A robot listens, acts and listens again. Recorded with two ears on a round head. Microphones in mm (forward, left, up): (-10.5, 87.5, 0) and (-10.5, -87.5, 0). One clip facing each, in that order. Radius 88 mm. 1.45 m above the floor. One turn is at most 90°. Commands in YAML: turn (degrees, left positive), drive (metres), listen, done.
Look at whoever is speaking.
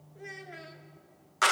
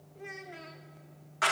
turn: 30
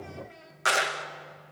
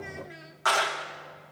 turn: -20
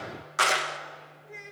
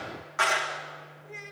done: "Facing the child speaking."